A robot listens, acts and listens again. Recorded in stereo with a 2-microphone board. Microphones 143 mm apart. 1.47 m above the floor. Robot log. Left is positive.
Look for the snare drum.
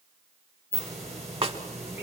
note: The snare drum: about 45° right or 135° right.
cmd yaw -45
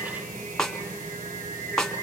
end: Facing the snare drum, 1 to 2 m away.